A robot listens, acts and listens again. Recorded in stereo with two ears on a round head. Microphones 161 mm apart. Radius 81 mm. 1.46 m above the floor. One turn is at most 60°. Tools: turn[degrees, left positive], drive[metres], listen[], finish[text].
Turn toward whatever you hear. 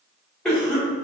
Action: turn[30]
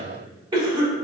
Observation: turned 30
Thought: So it is at 25° right.
Action: turn[-25]
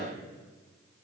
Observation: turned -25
Action: listen[]
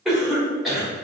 Action: finish[Facing the cough.]